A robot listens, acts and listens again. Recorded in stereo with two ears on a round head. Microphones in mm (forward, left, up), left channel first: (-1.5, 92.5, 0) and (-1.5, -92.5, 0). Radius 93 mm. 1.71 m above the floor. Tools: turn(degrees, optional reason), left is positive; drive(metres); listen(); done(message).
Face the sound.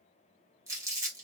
turn(degrees=-15, reason="The crumpling: about 15° right or 165° right.")
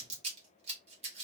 turn(degrees=-150, reason="So it is at 150° right.")
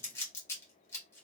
turn(degrees=15, reason="The crumpling is now 15° left.")
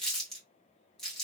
done("Found it: crumpling, straight ahead.")